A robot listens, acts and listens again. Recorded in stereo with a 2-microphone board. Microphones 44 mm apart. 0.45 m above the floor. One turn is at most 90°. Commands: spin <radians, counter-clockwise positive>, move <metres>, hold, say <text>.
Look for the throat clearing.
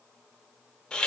hold
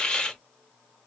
hold
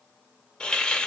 say I can't make out throat clearing, only a hiss.